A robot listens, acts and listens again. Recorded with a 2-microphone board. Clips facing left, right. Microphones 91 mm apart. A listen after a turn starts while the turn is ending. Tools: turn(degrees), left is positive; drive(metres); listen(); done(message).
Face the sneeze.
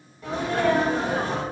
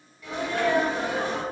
turn(degrees=40)
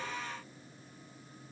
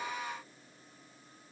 listen()
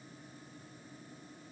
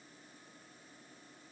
done("I heard a sneeze, but can't make it out now. It was about straight ahead or 100° left.")